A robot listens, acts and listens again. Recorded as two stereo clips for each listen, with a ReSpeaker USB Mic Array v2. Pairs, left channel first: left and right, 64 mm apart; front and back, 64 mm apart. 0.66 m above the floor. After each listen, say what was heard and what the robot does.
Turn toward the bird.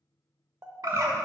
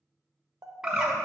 The bird: 105° right. Turn 105° right.
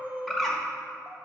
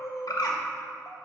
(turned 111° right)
Found it: a bird, straight ahead.